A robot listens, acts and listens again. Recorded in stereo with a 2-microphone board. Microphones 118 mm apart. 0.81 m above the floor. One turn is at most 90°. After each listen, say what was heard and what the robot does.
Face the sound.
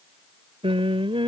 The singing: about 50° right or 130° right. Turn 50° right.
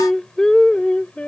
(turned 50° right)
So it is at 10° left. Turn 10° left.
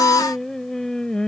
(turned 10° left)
The singing is now 10° left. Turn 10° left.
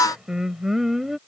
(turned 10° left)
Facing the singing.